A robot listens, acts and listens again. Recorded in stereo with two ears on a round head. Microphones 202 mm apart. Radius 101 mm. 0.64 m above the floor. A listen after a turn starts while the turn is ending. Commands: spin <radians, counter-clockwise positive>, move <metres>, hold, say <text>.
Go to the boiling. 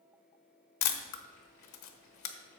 spin 0.52
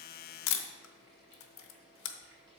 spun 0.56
spin -0.35
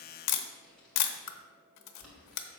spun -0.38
move 1.0
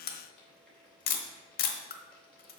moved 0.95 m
move 1.0
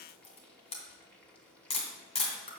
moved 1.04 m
move 1.0
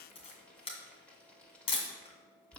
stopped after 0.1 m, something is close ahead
say I am next to the boiling.